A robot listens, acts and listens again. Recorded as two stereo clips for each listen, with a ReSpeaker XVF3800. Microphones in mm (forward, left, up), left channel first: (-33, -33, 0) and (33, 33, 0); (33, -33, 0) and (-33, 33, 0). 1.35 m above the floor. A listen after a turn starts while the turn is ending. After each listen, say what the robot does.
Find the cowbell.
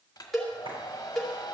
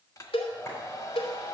Turn 45° right.
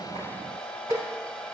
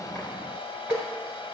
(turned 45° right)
Facing the cowbell, 2 to 4 m away.